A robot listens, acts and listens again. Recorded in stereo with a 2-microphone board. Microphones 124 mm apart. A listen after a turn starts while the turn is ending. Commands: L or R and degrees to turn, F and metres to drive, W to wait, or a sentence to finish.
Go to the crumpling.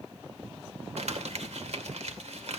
R70
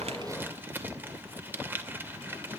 R20
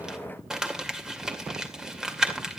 F1.0
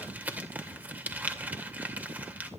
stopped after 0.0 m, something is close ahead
R15
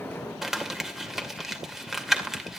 Blocked. The crumpling is further on, straight ahead.